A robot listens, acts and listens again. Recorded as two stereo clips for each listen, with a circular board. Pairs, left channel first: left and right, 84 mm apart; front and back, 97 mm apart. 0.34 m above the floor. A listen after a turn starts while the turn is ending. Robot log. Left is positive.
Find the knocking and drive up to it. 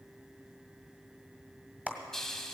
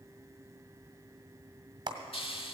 cmd idle
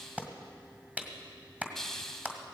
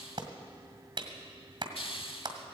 cmd idle
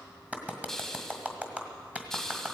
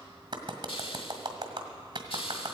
end: I can't make out knocking to turn to.